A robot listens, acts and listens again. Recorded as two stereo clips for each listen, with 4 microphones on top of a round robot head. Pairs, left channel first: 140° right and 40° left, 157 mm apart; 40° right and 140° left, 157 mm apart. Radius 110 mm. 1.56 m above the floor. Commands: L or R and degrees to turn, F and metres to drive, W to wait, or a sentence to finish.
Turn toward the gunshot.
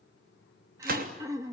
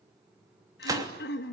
L70
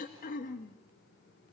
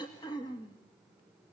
I heard a gunshot from this way, but can't make it out now.